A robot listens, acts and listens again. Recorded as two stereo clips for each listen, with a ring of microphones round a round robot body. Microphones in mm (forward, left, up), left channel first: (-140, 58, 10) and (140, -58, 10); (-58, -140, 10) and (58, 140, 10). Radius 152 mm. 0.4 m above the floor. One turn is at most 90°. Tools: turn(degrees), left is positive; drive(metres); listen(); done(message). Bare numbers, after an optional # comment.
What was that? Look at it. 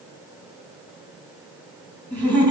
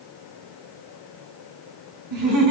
# The laughter: 50° left.
turn(50)
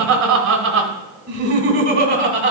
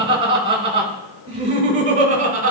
# The laughter is now 15° left.
turn(15)
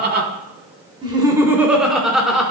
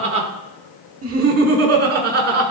# The laughter is now 65° left.
turn(65)
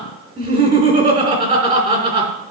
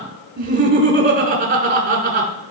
# The laughter is now 35° left.
turn(35)
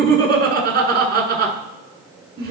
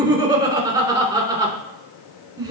done("Found it: laughter, straight ahead, 1 to 2 m away.")